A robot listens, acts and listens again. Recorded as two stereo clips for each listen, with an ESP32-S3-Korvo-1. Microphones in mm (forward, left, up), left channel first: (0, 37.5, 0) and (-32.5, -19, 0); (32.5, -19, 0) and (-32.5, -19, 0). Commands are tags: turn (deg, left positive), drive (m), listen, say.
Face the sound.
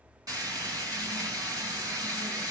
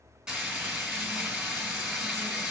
<turn deg="-100"/>
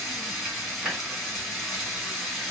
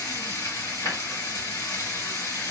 <turn deg="-35"/>
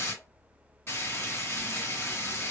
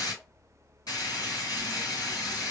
<turn deg="10"/>
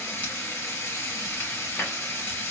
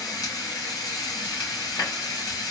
<say>Facing the frying, 2 to 4 m away.</say>